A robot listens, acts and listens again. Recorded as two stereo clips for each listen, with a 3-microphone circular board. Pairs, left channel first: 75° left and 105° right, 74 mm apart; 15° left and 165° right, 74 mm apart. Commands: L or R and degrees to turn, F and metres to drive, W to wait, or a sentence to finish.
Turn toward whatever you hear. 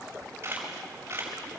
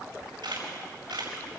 R160
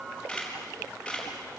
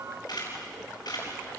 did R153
Found it: a camera shutter, straight ahead.